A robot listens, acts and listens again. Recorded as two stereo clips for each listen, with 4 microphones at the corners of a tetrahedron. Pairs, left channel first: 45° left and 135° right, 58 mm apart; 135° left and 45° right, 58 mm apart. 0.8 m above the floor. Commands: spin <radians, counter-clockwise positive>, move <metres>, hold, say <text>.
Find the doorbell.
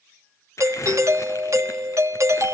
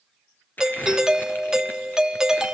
spin -2.18
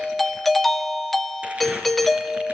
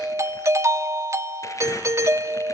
spin -0.70
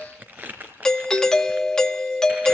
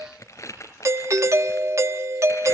spin -0.61
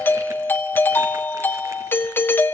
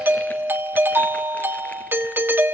say Facing the doorbell, 1 to 2 m away.